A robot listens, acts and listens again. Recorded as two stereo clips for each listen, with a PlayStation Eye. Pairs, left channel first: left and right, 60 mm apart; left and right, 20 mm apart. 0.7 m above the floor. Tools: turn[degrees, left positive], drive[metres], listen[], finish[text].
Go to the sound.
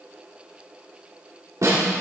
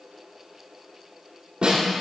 Thought: The snare drum: about 65° right or 115° right.
Action: turn[-65]
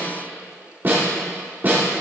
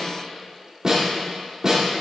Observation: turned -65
Thought: So it is at 40° right.
Action: turn[-40]
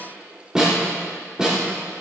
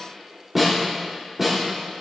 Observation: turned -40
Thought: The snare drum is now 15° right.
Action: turn[-15]
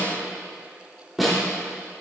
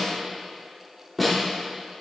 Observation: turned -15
Action: drive[1.0]
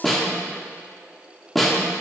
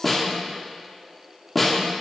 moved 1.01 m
Action: drive[1.0]
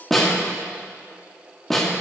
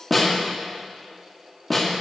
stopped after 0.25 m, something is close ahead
Action: finish[I am next to the snare drum.]